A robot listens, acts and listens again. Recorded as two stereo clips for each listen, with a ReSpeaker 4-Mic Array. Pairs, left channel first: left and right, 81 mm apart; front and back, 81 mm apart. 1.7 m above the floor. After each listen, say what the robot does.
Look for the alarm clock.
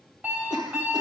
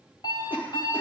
Turn 25° right.
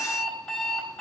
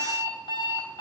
Facing the alarm clock.